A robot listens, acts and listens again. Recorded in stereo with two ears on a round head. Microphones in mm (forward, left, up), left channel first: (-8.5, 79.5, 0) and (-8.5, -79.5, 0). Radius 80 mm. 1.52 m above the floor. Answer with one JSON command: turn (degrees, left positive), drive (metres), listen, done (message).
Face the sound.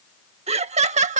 {"turn": -40}
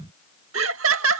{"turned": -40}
{"turn": -95}
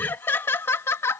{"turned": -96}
{"turn": 15}
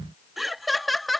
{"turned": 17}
{"done": "Facing the laughter."}